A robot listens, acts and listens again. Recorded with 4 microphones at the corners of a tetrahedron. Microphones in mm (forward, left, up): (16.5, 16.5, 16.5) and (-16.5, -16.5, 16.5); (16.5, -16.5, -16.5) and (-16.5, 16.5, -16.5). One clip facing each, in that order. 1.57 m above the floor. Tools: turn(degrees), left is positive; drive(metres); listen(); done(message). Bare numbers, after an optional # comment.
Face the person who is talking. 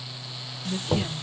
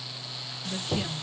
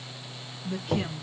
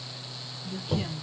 # The woman speaking: 30° right.
turn(-30)
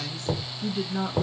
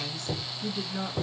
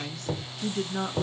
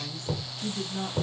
# The woman speaking is now 15° right.
turn(-15)
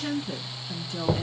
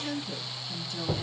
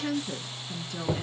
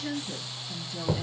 done("Found it: a woman speaking, straight ahead.")